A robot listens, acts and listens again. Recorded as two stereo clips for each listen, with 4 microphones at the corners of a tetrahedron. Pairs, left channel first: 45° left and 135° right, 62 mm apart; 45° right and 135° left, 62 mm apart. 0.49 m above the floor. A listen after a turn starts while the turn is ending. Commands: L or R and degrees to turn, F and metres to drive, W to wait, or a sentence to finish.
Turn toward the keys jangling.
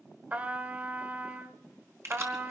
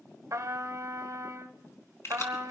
R90
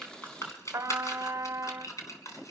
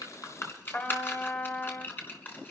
L15
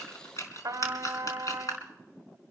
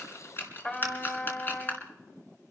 L10
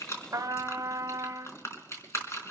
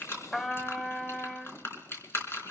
Found it: keys jangling, straight ahead, 2 to 4 m away.